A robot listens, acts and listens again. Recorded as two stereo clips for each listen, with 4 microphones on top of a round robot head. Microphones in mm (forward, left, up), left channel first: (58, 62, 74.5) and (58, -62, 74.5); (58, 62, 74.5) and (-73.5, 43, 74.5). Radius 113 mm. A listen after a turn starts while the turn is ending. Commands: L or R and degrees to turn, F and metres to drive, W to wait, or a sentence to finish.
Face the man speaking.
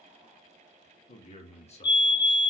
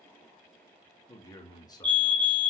L65
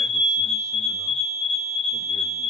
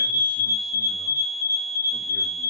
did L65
W
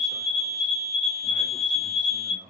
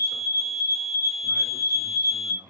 R95
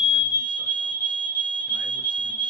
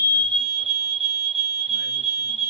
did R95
W
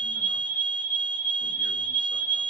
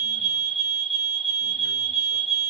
W
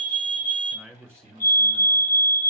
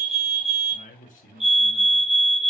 R10
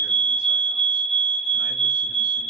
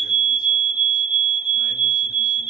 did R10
W
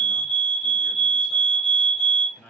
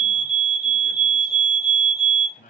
Found it: a man speaking, straight ahead, 2 to 4 m away.